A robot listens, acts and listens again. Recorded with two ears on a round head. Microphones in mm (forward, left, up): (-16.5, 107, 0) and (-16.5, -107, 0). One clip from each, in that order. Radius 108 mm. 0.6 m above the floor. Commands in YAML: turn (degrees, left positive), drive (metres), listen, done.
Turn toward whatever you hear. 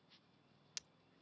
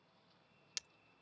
turn: -30
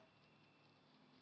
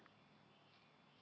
listen: true
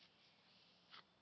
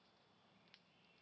done: "I heard breaking glass, but can't make it out now. It was about 25° left or 145° right."